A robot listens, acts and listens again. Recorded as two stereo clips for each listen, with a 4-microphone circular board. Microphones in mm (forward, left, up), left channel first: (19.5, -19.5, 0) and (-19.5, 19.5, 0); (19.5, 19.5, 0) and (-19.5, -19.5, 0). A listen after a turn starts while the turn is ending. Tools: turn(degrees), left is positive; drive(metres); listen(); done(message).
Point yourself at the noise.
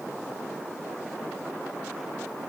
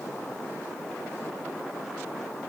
listen()
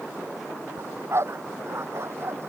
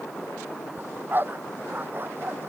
turn(degrees=175)
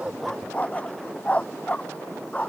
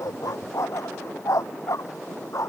turn(degrees=20)
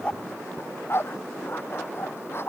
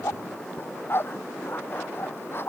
done("Found it: a dog barking, straight ahead.")